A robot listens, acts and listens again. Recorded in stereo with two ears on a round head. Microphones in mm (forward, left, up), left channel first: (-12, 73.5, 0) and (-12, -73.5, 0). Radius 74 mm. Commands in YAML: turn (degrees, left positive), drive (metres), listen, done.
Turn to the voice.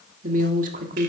turn: -45
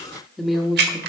done: "Found it: a woman speaking, straight ahead, 1 to 2 m away."